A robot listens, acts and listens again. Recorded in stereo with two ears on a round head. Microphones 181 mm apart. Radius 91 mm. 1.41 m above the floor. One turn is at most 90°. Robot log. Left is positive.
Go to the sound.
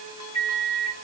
note: The microwave: about 35° left or 145° left.
cmd yaw +35
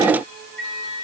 note: So it is at 105° left.
cmd yaw +90
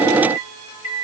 note: The microwave is now 15° left.
cmd yaw +15
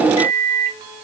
cmd fwd 1.0
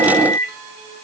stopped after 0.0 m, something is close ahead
end: Blocked. The microwave is further on, straight ahead.